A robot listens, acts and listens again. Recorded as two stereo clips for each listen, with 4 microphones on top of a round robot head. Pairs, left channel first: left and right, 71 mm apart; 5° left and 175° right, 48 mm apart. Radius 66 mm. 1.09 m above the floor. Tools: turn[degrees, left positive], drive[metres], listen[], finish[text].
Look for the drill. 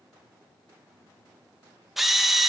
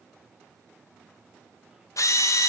Action: finish[Facing the drill.]